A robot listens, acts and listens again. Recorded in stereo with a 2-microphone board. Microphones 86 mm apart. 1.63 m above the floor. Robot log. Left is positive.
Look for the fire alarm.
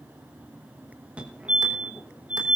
cmd yaw -30
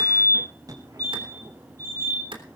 note: So it is at 135° right.
cmd yaw -135
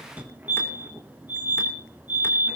note: The fire alarm is now 20° right.
cmd yaw -20
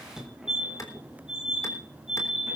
end: Facing the fire alarm.